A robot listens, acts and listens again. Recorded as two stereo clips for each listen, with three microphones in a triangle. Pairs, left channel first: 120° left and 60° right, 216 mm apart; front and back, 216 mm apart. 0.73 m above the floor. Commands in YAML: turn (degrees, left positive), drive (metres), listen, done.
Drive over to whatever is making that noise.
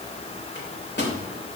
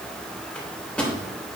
turn: 85
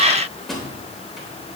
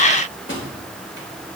turn: 30
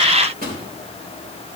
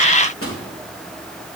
turn: -10
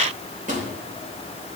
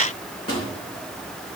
drive: 1.0
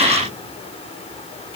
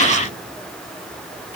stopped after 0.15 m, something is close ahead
listen: true
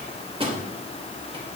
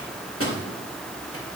done: "Blocked. The microwave is further on, straight ahead."